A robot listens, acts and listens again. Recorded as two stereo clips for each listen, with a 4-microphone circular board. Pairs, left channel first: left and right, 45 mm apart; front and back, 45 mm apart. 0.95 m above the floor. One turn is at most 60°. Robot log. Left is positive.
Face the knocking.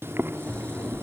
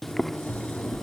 note: The knocking: 55° right.
cmd yaw -55
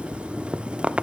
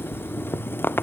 end: Found it: knocking, straight ahead.